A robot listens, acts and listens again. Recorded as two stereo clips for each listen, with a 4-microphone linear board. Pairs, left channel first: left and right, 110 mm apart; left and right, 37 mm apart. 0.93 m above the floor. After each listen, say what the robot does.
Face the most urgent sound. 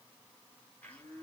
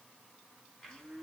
Keep listening.
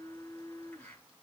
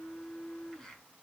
Keep listening.
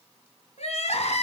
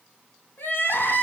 Turn 75° left.
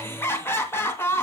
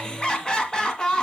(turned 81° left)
Turn 25° left.
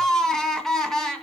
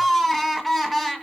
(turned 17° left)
Found it: crying, straight ahead.